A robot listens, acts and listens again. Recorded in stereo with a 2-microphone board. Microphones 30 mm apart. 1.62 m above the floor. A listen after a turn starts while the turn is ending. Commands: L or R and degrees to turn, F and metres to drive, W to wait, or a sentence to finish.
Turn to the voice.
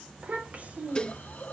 R50
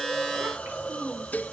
R75
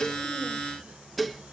W
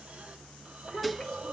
L20
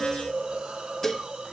W
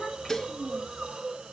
Found it: a child speaking, straight ahead.